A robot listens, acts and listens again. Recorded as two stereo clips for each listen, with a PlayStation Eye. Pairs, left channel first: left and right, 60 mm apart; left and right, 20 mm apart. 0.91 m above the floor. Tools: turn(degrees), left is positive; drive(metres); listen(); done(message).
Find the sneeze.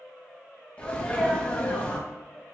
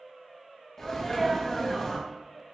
turn(degrees=20)
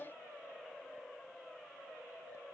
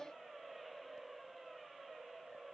listen()
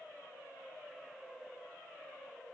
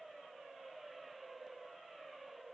done("I heard a sneeze, but can't make it out now. It was about straight ahead or 140° left.")